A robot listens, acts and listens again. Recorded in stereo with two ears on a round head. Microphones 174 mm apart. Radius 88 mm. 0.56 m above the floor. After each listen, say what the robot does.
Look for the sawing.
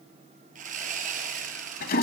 Turn 40° right.
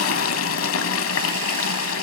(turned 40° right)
Keep listening.
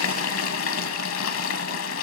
Keep listening.
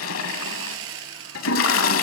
Turn 100° right.
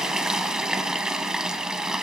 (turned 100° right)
Keep listening.
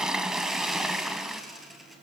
Found it: sawing, straight ahead, 2 to 4 m away.